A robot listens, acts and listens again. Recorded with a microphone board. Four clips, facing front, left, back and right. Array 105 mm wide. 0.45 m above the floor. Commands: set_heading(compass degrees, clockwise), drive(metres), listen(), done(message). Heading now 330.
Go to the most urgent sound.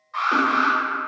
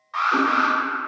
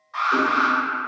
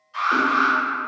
set_heading(235)
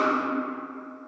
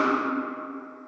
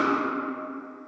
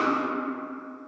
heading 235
listen()
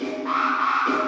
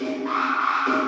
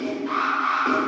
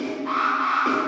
set_heading(220)
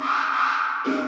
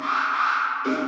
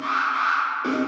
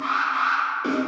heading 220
drive(1.0)
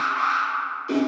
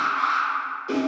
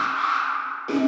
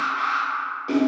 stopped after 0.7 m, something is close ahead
done("I am next to the alarm.")